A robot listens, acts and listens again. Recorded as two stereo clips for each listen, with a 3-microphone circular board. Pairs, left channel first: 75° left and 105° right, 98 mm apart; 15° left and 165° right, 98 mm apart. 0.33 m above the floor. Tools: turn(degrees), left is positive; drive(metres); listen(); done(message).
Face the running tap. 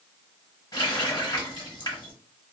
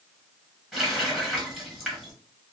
turn(degrees=110)
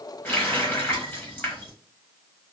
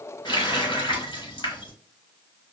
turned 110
turn(degrees=10)
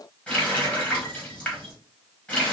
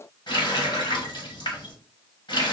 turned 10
done("Facing the running tap.")